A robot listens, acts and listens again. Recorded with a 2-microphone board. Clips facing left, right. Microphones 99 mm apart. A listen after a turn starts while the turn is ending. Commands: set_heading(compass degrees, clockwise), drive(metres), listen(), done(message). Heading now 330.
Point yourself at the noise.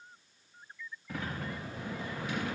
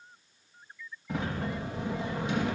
set_heading(350)
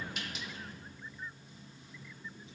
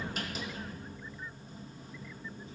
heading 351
set_heading(131)
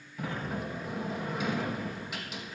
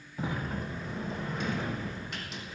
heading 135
done("Found it: a sliding door, straight ahead.")